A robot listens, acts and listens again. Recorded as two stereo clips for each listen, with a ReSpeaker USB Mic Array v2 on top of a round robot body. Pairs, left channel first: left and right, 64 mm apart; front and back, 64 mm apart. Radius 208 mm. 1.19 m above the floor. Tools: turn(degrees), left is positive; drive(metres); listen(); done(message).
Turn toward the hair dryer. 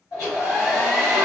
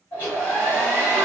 turn(degrees=65)
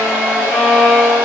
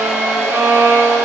turn(degrees=-20)
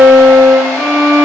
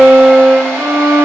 listen()
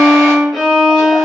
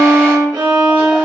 listen()
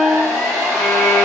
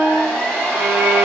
done("Found it: a hair dryer, straight ahead, 1 to 2 m away.")